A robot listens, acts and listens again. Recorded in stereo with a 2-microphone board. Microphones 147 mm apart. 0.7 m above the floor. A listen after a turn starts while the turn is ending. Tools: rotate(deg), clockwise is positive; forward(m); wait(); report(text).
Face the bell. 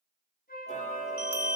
rotate(30)
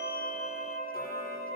wait()
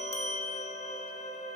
rotate(135)
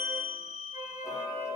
rotate(60)
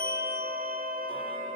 wait()
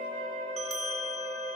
report("Facing the bell.")